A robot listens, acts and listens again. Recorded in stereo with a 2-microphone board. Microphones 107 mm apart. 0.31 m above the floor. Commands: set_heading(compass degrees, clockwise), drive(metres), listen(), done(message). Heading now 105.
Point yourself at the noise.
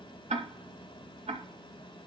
set_heading(180)
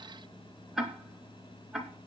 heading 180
done("Found it: ticking, straight ahead, 2 to 4 m away.")